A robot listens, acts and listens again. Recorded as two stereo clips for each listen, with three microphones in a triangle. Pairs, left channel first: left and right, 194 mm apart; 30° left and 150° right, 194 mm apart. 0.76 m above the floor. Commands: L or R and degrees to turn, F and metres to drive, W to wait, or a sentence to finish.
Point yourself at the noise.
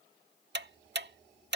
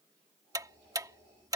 R80
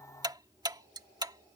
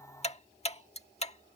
R25
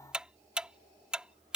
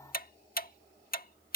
Found it: ticking, straight ahead.